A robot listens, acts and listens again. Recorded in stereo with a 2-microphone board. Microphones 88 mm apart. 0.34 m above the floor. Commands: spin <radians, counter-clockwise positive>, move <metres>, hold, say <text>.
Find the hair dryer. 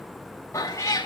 hold
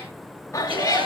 spin -1.57
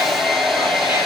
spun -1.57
say Found it: a hair dryer, straight ahead.